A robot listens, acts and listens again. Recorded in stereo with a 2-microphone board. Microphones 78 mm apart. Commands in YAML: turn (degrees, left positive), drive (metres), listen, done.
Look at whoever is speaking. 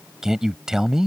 turn: -30
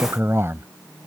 turn: -140
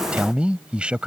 turn: -15
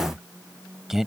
done: "Facing the man speaking."